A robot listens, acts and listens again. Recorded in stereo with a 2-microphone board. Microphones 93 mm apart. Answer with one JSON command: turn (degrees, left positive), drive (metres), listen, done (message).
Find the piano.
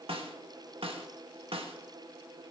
{"listen": true}
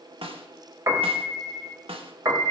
{"turn": -40}
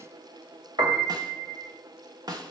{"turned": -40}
{"turn": -95}
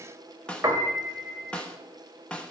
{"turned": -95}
{"turn": -35}
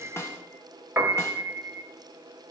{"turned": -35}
{"turn": -20}
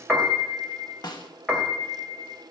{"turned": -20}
{"done": "Found it: a piano, straight ahead, 1 to 2 m away."}